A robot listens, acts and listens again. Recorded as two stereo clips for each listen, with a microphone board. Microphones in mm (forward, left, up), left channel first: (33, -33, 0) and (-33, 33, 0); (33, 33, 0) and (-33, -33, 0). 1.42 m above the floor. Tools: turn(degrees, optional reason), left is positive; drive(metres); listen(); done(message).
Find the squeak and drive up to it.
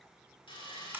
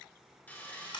listen()
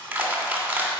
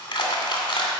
listen()
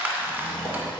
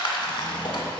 turn(degrees=10, reason="The squeak: 10° left.")
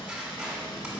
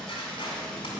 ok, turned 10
drive(metres=1.0)
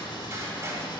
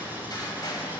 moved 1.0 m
drive(metres=1.0)
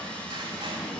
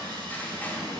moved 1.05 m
drive(metres=1.0)
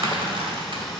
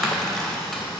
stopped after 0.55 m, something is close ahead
turn(degrees=15, reason="The squeak is now 15° left.")
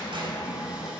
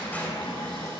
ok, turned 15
done("Arrived at the squeak, straight ahead.")